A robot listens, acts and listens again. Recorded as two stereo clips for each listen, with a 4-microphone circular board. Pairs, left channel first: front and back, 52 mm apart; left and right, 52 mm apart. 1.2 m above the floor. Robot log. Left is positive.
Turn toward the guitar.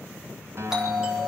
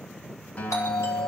note: The guitar: 145° left.
cmd yaw +145
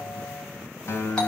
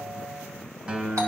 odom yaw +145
note: The guitar is now 25° right.
cmd yaw -25
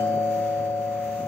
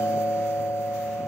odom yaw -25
cmd idle
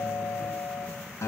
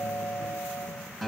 end: Found it: a guitar, straight ahead.